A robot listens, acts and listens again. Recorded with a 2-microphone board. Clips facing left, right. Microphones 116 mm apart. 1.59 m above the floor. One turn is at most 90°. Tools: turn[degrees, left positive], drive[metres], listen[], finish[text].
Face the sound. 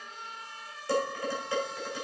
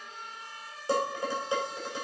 Thought: The dishes clattering: about 20° right or 160° right.
Action: turn[-20]
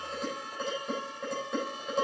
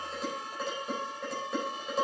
Action: finish[Found it: dishes clattering, straight ahead.]